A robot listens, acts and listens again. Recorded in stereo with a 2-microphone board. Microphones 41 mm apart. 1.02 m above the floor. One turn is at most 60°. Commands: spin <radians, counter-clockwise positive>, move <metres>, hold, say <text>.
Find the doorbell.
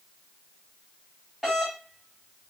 spin -0.52
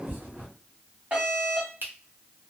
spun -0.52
spin -1.05
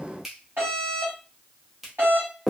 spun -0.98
spin -1.05
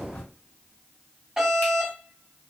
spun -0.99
spin -0.35
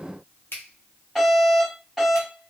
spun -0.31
say Found it: a doorbell, straight ahead, 1 to 2 m away.